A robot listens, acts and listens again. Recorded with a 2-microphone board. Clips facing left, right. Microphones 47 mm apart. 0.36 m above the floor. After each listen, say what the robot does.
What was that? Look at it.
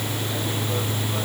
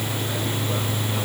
Keep listening.
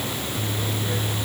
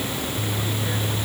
Keep listening.
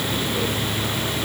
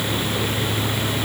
I can't make out anything.